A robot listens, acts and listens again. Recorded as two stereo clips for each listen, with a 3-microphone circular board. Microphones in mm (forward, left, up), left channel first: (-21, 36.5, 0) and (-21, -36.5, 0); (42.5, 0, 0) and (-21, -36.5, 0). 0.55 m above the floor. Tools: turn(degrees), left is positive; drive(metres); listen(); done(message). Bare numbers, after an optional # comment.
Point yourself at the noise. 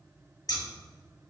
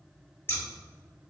# The scissors: 80° left.
turn(80)
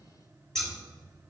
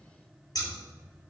done("Found it: scissors, straight ahead.")